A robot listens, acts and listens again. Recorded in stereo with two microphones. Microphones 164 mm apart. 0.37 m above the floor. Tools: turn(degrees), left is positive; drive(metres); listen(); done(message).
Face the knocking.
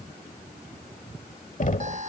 turn(degrees=50)
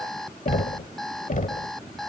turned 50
turn(degrees=65)
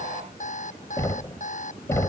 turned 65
turn(degrees=20)
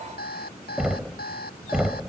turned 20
done("Facing the knocking.")